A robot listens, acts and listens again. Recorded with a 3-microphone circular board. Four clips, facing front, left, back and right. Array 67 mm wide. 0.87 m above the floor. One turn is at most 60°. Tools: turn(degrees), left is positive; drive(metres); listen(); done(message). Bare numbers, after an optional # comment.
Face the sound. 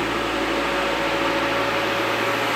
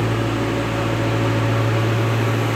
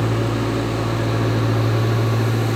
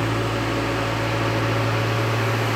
listen()
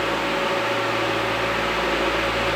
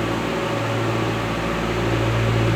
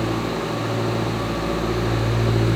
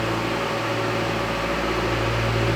listen()
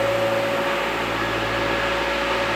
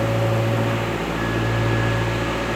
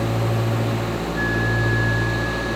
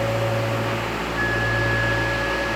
done("I can't make out anything.")